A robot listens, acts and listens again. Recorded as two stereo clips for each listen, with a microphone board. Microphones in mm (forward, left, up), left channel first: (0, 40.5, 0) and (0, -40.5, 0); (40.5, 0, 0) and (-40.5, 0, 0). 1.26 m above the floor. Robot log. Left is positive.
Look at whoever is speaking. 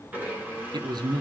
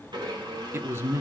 note: The man speaking: 120° right.
cmd yaw -120
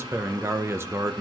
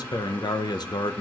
note: The man speaking is now 30° right.
cmd yaw -30
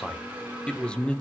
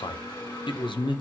note: The man speaking is now 10° left.
cmd yaw +10
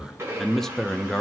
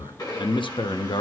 end: Found it: a man speaking, straight ahead.